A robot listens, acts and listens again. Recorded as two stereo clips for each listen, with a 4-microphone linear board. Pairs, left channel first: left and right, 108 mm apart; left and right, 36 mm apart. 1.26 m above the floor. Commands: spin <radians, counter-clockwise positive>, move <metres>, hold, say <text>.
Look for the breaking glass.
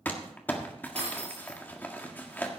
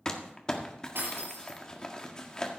spin -1.57
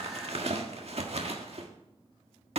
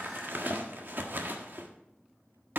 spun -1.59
say I heard breaking glass from this way, but can't make it out now.